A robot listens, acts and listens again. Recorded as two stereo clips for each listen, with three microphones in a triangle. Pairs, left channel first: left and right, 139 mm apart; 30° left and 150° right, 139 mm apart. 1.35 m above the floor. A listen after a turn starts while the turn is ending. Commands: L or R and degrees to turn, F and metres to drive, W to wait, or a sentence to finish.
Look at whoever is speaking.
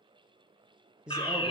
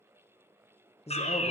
Found it: a man speaking, straight ahead, 1 to 2 m away.